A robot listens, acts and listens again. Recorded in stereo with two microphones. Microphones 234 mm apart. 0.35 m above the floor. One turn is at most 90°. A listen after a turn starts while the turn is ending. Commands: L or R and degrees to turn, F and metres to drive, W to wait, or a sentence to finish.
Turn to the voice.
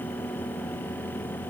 W
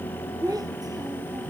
R15
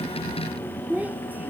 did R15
R30
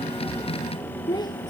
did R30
L15
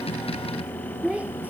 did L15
Found it: a child speaking, straight ahead.